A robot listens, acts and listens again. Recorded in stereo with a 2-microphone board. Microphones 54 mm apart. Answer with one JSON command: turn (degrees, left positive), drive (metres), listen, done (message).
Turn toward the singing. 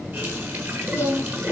{"turn": 40}
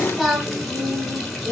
{"turn": -10}
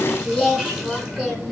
{"done": "Found it: singing, straight ahead."}